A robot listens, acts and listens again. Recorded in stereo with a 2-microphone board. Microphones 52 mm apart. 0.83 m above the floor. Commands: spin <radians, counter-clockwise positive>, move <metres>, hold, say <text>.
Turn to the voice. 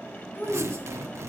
spin 0.79
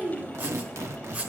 say Facing the child speaking.